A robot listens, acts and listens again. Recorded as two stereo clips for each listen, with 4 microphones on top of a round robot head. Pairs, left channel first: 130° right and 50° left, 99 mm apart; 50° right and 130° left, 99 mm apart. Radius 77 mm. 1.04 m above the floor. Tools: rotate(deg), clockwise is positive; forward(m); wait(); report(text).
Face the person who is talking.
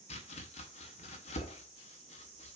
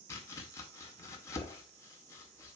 wait()
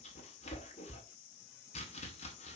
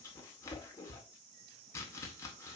wait()
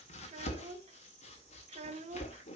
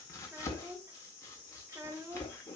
rotate(-70)
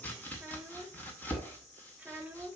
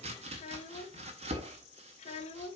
rotate(25)
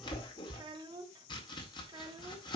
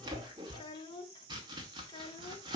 report("Facing the child speaking, 1 to 2 m away.")